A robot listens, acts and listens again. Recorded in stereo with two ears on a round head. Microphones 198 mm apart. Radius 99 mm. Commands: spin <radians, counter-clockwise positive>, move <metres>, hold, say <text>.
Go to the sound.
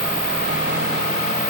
hold
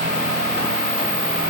hold
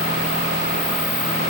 say I can't make out anything to turn to.